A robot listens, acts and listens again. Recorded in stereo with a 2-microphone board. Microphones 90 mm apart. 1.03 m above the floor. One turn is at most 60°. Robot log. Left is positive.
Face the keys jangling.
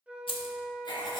cmd yaw +60
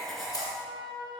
note: Nothing new. It was at 30° left.
cmd yaw +30
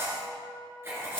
cmd idle
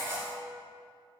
end: Facing where the keys jangling came from. I can't hear it now.